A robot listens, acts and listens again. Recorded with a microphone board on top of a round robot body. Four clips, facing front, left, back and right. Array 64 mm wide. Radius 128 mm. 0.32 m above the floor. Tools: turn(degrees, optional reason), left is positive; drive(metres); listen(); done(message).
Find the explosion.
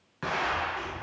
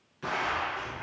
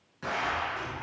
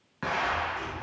turn(degrees=-70, reason="The explosion: 70° right.")
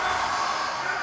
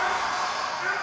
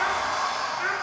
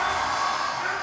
done("I heard an explosion from this way, but can't make it out now.")